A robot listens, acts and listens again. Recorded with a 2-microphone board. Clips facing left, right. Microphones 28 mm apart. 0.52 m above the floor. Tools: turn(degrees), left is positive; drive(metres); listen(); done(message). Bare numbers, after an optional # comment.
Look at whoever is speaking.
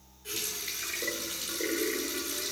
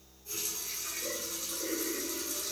listen()
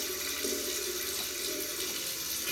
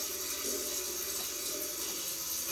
listen()
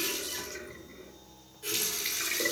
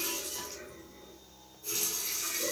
done("I can't make out anyone speaking, only a running tap.")